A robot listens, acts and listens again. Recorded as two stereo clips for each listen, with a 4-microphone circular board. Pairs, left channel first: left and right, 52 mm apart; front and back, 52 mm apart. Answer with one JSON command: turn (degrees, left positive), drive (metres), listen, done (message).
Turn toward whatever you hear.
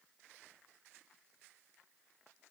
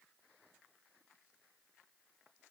{"listen": true}
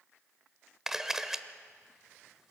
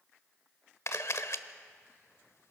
{"turn": -10}
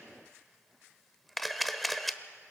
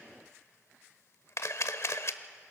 {"done": "Found it: a camera shutter, straight ahead, 1 to 2 m away."}